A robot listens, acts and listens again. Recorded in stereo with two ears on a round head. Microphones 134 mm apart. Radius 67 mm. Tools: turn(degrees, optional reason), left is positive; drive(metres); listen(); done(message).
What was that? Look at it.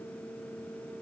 listen()
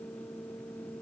listen()
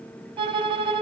turn(degrees=-35, reason="The violin: about 35° right or 145° right.")
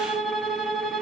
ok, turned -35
done("Found it: a violin, straight ahead, 1 to 2 m away.")